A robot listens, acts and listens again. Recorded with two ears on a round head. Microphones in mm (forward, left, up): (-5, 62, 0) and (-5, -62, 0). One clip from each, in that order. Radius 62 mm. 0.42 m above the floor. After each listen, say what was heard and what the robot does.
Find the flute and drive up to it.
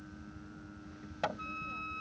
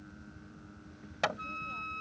Turn 30° right.
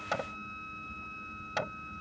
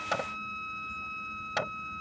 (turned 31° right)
So it is at 145° right. Turn 145° right.
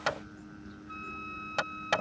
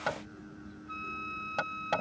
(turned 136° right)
The flute is now 10° right. Turn 10° right.
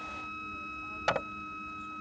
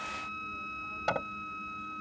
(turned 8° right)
Drive 1.0 m forward.
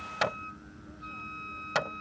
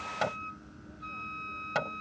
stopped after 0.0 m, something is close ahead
Something is in my way. I am facing the flute but have not reached it.